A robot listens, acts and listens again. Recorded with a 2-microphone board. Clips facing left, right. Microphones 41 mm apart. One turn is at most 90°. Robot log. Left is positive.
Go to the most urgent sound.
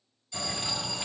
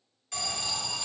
cmd yaw -90
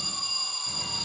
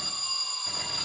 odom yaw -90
cmd fwd 1.0
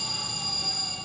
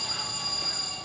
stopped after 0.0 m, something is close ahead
end: Blocked. The alarm is further on, straight ahead.